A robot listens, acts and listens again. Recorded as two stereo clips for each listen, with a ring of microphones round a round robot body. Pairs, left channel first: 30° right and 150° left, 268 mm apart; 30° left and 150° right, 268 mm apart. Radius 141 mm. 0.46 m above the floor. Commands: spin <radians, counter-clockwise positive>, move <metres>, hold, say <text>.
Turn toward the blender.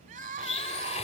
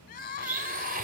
spin -1.66
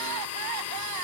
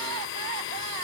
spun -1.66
say Facing the blender.